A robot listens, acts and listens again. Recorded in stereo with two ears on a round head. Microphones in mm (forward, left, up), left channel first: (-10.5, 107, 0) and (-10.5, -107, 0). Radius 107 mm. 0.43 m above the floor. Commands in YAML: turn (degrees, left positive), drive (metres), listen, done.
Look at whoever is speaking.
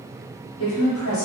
turn: 60
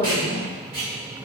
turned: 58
turn: 15
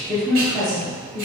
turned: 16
done: "Found it: a woman speaking, straight ahead, 1 to 2 m away."